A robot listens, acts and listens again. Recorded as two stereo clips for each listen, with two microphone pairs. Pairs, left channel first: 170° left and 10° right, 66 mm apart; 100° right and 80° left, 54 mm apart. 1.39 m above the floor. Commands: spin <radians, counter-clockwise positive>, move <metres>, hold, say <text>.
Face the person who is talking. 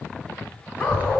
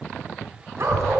spin 0.96
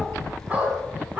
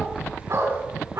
spin 0.35
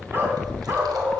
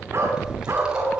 say Facing the child speaking.